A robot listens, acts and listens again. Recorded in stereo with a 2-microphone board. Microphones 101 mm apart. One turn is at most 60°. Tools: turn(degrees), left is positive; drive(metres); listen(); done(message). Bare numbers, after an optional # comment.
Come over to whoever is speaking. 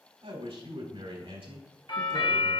# The man speaking: about 75° right or 105° right.
turn(-60)
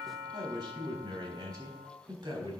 # So it is at 45° right.
turn(-45)
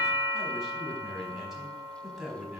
drive(1.0)
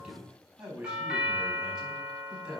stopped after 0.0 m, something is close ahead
# The man speaking is now 10° right.
turn(-10)
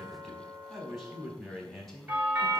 done("Something is in my way. I am facing the man speaking but have not reached it.")